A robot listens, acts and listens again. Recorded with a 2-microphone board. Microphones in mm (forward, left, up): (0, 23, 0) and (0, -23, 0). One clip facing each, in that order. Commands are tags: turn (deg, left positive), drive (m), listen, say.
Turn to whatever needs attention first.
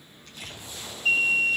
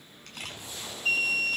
<turn deg="30"/>
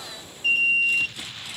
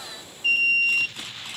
<say>Facing the alarm.</say>